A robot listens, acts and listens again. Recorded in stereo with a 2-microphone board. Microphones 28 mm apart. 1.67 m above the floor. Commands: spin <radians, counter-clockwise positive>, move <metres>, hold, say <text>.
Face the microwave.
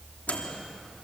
spin 1.13
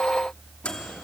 spin 0.87
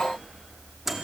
spin -0.17
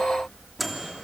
say Found it: a microwave, straight ahead.